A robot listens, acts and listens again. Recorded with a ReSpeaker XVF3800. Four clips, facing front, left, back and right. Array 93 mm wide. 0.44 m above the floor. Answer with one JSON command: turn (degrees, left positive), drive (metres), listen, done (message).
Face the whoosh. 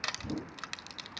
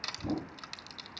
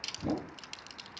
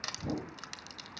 {"turn": 180}
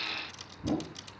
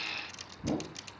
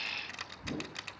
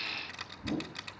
{"turn": 45}
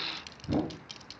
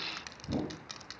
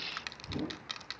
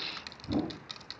{"done": "Found it: a whoosh, straight ahead, 1 to 2 m away."}